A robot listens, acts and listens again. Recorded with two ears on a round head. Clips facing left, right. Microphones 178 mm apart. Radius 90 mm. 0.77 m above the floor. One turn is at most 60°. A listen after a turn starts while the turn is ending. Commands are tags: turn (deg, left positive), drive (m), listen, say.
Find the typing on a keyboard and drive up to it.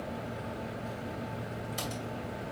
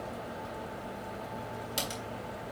<turn deg="-60"/>
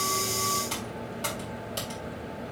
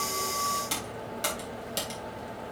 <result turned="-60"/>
<turn deg="-20"/>
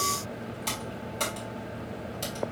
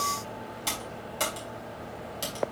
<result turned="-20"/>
<turn deg="-10"/>
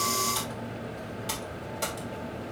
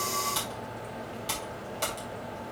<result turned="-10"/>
<drive m="1.0"/>
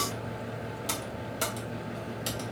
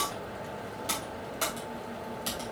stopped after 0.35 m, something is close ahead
<turn deg="15"/>
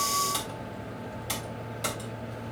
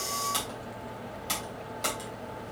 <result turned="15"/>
<say>Something is in my way. I am facing the typing on a keyboard but have not reached it.</say>